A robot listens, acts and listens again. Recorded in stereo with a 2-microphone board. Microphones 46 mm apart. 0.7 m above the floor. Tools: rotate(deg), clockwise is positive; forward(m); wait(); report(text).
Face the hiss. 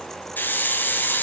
rotate(-45)
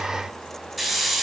report("Found it: a hiss, straight ahead.")